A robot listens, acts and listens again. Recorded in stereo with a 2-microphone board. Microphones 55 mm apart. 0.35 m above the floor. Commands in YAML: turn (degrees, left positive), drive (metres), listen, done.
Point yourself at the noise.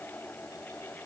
listen: true
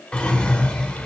turn: 20
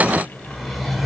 done: "Facing the drawer, under 1 m away."